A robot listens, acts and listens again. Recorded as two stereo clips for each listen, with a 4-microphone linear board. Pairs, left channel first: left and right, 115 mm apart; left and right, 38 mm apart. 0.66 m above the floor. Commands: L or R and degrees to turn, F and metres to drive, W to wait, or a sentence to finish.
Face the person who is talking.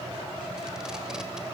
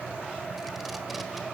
W
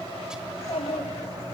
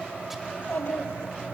L55
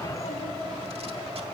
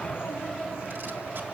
W
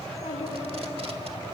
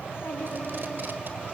L70
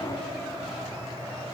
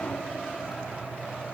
W
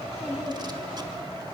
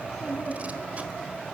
Facing the child speaking.